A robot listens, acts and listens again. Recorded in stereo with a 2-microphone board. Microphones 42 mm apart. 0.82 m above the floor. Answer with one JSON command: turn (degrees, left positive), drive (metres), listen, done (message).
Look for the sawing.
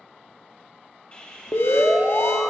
{"turn": 25}
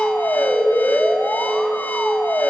{"listen": true}
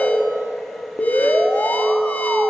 {"listen": true}
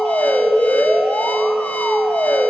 {"done": "I heard sawing, but can't make it out now. It was about straight ahead or 130° left."}